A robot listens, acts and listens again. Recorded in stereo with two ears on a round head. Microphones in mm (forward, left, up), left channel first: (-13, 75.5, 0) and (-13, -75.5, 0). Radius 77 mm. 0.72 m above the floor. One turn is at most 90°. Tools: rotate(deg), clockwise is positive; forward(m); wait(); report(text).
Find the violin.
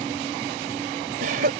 wait()
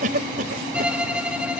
rotate(30)
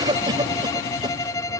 rotate(-20)
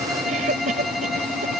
report("Found it: a violin, straight ahead.")